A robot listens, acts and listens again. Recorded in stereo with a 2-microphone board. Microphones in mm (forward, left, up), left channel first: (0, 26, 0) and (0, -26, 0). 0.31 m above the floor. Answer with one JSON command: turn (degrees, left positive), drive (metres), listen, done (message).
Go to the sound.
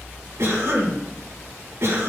{"turn": -65}
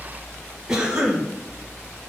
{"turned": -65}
{"turn": -15}
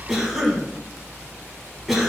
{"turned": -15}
{"drive": 1.0}
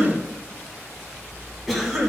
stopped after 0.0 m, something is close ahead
{"done": "Blocked. The cough is further on, straight ahead."}